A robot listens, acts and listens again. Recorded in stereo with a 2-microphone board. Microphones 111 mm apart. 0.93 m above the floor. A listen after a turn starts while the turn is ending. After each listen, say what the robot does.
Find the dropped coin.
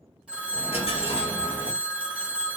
Turn 65° left.
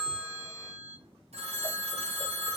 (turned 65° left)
Keep listening.
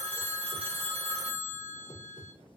I heard a dropped coin, but can't make it out now. It was about straight ahead or 50° left.